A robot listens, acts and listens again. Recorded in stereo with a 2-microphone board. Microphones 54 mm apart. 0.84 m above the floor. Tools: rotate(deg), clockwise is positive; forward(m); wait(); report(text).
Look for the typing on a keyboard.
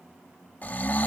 wait()
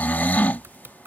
rotate(45)
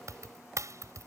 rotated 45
rotate(90)
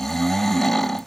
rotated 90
wait()
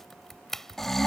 report("Facing the typing on a keyboard.")